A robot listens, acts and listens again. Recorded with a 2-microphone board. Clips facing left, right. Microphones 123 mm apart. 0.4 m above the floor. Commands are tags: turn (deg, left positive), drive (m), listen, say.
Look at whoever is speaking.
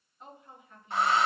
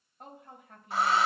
<turn deg="-60"/>
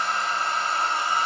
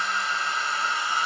<listen/>
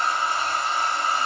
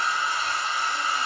<listen/>
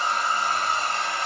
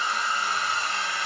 <say>I heard a woman speaking, but can't make it out now. It was about straight ahead or 60° right.</say>